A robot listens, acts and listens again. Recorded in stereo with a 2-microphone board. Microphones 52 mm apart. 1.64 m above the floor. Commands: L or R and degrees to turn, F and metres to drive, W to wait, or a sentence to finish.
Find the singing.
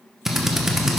W
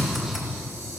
W
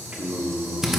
R20
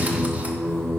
L10
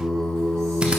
L10
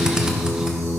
L10
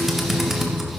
W
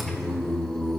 L10
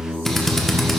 Facing the singing.